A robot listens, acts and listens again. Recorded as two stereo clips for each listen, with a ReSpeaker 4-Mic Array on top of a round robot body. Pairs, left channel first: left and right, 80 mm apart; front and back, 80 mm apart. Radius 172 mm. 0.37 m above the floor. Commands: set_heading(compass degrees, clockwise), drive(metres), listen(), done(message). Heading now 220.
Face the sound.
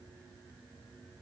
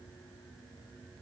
listen()
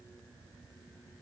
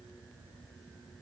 listen()
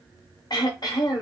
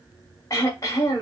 set_heading(170)
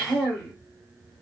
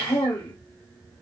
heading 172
done("Found it: throat clearing, straight ahead, under 1 m away.")